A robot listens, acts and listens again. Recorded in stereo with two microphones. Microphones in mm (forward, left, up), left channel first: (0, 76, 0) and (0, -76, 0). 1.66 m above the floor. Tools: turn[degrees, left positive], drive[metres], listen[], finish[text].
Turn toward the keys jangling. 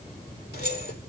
Action: turn[90]
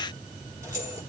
Thought: So it is at 20° right.
Action: turn[-20]
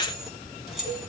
Action: finish[Facing the keys jangling.]